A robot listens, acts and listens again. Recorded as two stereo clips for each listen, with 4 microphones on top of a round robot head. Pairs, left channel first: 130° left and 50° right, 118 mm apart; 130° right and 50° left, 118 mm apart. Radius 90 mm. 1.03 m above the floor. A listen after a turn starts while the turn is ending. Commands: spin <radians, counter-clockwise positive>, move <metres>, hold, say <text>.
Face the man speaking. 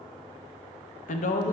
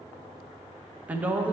spin 2.27
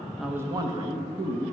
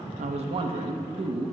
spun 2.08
say Found it: a man speaking, straight ahead, under 1 m away.